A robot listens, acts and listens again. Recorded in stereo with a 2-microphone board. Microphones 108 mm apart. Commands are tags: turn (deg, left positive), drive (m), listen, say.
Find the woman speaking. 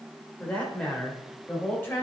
<turn deg="20"/>
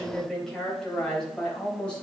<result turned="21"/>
<turn deg="30"/>
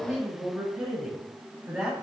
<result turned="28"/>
<turn deg="-10"/>
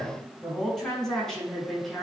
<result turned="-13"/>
<say>Facing the woman speaking.</say>